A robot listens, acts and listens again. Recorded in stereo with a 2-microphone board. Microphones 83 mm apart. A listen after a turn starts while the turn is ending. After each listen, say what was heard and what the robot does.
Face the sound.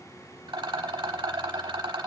The rattle: about 70° right or 110° right. Turn 70° right.
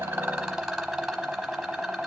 Found it: a rattle, straight ahead.